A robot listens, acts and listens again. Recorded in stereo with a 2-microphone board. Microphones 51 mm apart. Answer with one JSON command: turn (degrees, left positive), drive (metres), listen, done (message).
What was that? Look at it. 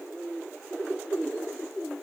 {"listen": true}
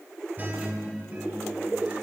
{"turn": -35}
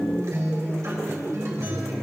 {"turn": -110}
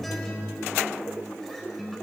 {"done": "Facing the guitar."}